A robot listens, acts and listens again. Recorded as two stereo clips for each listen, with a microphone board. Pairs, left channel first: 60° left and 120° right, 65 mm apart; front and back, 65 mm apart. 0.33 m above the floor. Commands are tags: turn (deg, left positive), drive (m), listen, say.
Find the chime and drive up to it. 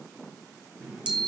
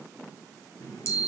<turn deg="-45"/>
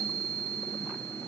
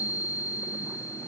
<turn deg="10"/>
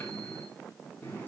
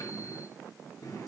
<drive m="1.0"/>
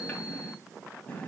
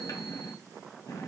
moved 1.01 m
<drive m="1.0"/>
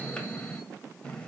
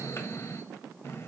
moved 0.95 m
<drive m="1.0"/>
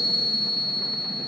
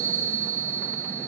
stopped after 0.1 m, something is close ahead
<turn deg="-10"/>
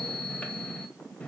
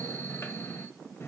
<say>Arrived at the chime, straight ahead.</say>